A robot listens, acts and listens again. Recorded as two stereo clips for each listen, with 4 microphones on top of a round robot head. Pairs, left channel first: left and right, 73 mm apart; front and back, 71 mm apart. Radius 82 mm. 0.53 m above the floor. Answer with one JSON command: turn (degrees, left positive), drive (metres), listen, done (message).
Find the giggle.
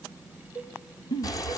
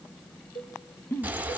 {"turn": 60}
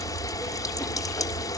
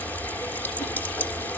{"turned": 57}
{"listen": true}
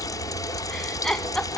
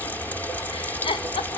{"done": "Facing the giggle."}